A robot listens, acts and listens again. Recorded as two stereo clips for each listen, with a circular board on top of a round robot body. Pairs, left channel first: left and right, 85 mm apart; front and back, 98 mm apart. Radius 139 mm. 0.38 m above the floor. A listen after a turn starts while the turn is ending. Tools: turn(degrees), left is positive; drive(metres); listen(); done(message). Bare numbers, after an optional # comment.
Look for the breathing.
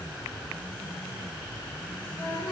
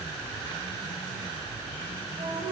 listen()
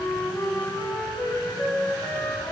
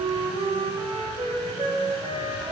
listen()
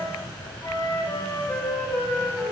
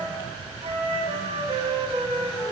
done("I can't make out breathing, only a flute.")